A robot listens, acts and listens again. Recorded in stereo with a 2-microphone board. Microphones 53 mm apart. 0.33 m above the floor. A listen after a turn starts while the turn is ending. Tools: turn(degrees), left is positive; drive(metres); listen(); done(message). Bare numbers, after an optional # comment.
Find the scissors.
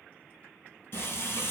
listen()
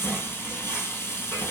listen()
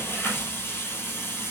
done("I can't make out scissors to turn to.")